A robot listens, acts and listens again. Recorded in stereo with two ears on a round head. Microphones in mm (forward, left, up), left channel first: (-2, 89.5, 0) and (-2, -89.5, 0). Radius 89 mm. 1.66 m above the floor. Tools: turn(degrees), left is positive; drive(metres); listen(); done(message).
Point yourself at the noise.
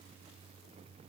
listen()
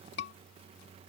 turn(degrees=60)
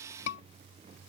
turn(degrees=60)
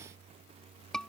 done("Found it: a scream, straight ahead.")